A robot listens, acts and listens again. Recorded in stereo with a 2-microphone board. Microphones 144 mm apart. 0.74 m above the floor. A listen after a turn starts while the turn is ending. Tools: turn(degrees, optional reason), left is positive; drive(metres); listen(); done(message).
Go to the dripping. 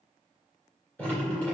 turn(degrees=30)
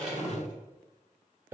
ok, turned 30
turn(degrees=-15, reason="So it is at 15° right.")
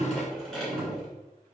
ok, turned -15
drive(metres=1.0)
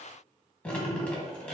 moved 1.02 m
turn(degrees=10, reason="The dripping is now 10° left.")
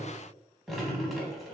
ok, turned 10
drive(metres=1.0)
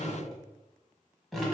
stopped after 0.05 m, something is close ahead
done("Arrived at the dripping, straight ahead.")